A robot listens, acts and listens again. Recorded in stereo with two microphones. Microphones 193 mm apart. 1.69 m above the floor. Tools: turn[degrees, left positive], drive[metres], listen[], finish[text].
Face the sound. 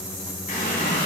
Thought: The running tap: about 50° left or 130° left.
Action: turn[50]
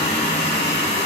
Thought: So it is at 75° left.
Action: turn[75]
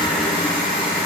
Thought: The running tap is now 10° right.
Action: turn[-10]
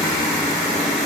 Action: finish[Facing the running tap, 1 to 2 m away.]